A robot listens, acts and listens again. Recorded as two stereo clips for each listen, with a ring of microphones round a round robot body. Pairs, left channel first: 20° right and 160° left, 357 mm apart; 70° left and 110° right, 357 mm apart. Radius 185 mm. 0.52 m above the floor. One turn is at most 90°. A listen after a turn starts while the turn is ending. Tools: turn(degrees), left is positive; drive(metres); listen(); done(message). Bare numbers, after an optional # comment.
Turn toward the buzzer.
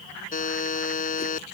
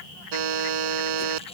# The buzzer: 90° right.
turn(-90)
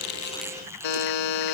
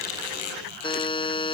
# The buzzer is now 10° right.
turn(-10)
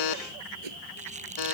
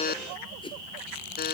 done("Facing the buzzer.")